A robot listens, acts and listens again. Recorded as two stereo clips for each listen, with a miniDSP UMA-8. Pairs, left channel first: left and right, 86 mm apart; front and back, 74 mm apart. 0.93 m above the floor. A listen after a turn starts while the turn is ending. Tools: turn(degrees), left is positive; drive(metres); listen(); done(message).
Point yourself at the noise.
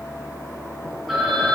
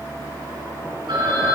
turn(degrees=180)
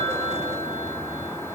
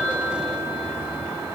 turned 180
listen()
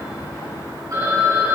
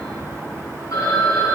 turn(degrees=-45)
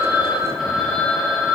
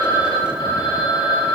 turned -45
done("Facing the phone ringing, over 4 m away.")